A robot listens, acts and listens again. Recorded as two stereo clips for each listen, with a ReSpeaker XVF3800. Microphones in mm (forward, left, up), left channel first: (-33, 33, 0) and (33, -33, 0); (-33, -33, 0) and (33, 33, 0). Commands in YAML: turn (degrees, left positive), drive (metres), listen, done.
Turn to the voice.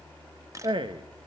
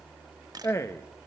turn: -75
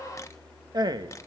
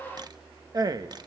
done: "Found it: a man speaking, straight ahead."